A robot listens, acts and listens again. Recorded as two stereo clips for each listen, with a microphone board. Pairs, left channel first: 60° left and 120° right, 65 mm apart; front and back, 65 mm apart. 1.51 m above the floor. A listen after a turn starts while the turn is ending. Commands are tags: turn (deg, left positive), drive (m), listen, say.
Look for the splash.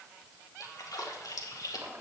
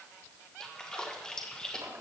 <turn deg="80"/>
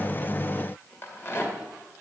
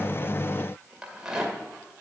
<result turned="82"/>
<say>I heard a splash from this way, but can't make it out now.</say>